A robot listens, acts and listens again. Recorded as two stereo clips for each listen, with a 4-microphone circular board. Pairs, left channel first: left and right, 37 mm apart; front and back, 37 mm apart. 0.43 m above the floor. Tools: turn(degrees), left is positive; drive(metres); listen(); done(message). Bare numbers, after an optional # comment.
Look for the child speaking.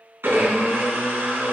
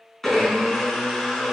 listen()
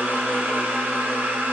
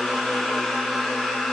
listen()
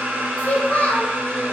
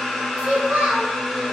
# The child speaking: 135° left.
turn(135)
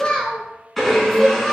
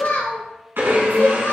# The child speaking is now 25° left.
turn(25)
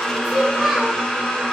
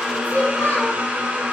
done("Found it: a child speaking, straight ahead.")